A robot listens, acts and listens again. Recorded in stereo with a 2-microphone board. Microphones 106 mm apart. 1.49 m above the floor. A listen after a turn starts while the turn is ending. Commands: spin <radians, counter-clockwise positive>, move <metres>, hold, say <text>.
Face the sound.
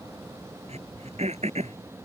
spin -1.57
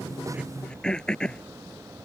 spin 0.17
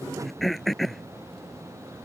say Found it: throat clearing, straight ahead.